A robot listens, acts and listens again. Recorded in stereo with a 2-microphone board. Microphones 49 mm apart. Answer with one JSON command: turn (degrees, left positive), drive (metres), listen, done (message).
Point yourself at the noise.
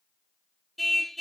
{"turn": 30}
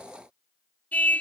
{"turn": 150}
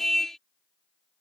{"done": "Facing the car horn."}